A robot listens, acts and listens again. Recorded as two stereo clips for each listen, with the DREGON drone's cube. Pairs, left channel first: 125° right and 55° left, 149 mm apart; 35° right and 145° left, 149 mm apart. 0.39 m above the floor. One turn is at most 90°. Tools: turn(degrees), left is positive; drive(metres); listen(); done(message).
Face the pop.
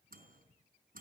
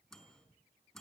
listen()
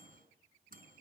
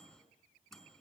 listen()
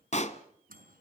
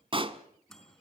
turn(degrees=-90)
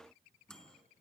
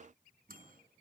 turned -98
turn(degrees=-65)
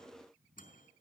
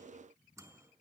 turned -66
done("I heard a pop from this way, but can't make it out now.")